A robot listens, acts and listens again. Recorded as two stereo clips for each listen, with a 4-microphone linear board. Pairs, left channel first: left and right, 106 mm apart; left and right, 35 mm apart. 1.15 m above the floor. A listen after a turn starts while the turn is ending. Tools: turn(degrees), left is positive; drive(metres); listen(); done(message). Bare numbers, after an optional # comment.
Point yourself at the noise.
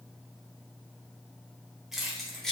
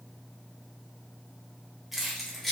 turn(30)
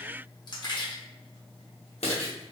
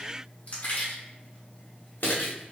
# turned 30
# So it is at 105° left.
turn(105)
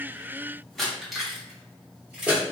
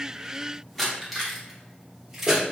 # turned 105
# The keys jangling is now 10° right.
turn(-10)
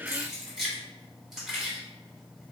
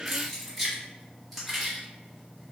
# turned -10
done("Facing the keys jangling, 1 to 2 m away.")